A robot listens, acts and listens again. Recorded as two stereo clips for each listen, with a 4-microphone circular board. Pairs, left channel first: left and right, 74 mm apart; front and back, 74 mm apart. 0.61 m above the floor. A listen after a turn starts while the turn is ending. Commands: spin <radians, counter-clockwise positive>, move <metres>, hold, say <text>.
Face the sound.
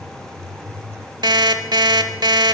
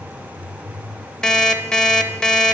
spin -1.40
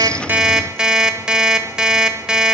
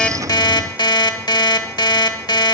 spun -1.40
spin -0.17
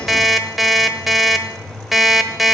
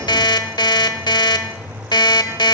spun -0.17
say Facing the alarm clock.